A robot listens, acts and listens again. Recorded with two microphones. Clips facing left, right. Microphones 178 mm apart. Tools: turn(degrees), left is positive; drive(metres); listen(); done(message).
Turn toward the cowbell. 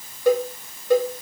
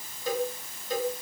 turn(degrees=70)
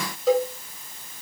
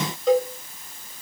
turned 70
done("Found it: a cowbell, straight ahead, 2 to 4 m away.")